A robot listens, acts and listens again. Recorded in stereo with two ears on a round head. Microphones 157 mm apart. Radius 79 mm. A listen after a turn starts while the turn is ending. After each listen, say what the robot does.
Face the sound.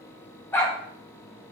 Turn 30° left.
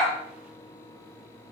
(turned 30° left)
Keep listening.
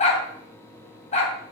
Turn 135° left.
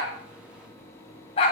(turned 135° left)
Turn 35° left.
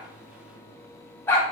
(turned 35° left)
Turn 10° left.
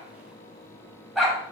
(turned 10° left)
Found it: a dog barking, straight ahead, 2 to 4 m away.